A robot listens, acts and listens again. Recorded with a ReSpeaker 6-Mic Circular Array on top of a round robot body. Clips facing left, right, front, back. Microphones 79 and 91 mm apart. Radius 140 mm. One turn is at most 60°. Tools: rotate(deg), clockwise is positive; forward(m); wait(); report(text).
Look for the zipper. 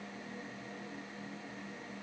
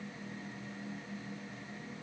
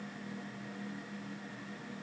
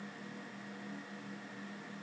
wait()
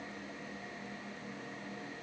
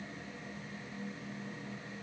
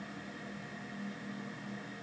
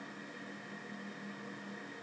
wait()
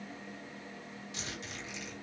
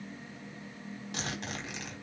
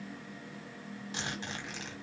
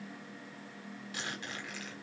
rotate(60)
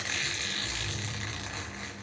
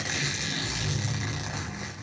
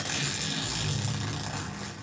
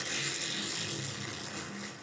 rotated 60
rotate(15)
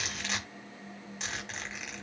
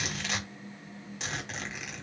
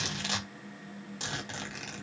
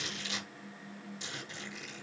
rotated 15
report("Facing the zipper.")